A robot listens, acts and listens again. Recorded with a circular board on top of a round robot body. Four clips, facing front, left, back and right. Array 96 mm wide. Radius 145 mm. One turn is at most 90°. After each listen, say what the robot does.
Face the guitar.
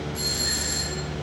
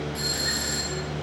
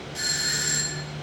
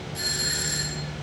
Keep listening.
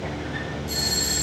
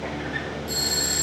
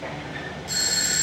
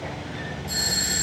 Keep listening.
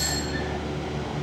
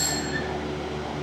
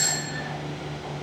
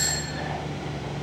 I can't make out a guitar to turn to.